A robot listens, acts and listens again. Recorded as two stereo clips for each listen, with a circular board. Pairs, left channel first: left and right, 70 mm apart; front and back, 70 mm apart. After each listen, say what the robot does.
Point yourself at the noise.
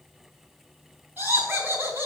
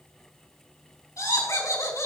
Turn 30° right.
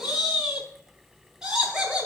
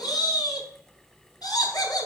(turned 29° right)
Turn 10° right.
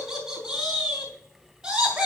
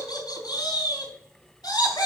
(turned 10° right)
Turn 10° right.
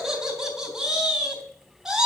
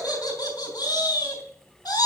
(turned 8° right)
Facing the laughter, 2 to 4 m away.